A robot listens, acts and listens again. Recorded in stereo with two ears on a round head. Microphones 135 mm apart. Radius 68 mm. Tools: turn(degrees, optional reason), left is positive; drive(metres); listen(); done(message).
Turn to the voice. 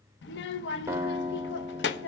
turn(degrees=90)
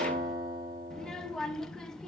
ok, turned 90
done("Found it: a child speaking, straight ahead, under 1 m away.")